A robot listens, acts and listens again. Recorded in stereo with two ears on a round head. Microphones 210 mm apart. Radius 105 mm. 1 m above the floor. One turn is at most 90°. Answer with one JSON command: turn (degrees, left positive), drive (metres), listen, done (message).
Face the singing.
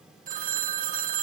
{"listen": true}
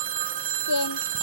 {"turn": 90}
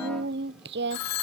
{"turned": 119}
{"turn": -50}
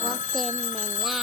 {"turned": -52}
{"listen": true}
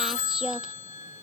{"done": "Found it: singing, straight ahead."}